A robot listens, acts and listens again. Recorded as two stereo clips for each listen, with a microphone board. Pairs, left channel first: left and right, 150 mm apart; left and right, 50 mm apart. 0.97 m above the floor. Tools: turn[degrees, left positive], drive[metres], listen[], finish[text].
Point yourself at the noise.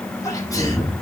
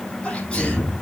Thought: The sneeze: about 20° left or 160° left.
Action: turn[20]
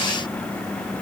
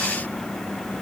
Action: listen[]
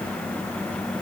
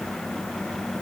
Action: finish[I heard a sneeze, but can't make it out now. It was about straight ahead or 140° left.]